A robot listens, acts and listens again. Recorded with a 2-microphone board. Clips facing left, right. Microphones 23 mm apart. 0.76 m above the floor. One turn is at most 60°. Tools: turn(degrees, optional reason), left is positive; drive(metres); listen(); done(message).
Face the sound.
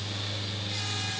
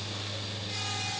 listen()
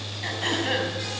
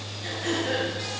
turn(degrees=60)
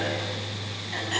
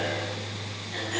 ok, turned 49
turn(degrees=40, reason="So it is at 40° left.")
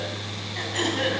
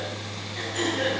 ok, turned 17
turn(degrees=25, reason="The throat clearing is now 25° left.")
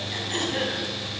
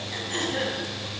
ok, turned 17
done("Facing the throat clearing, 2 to 4 m away.")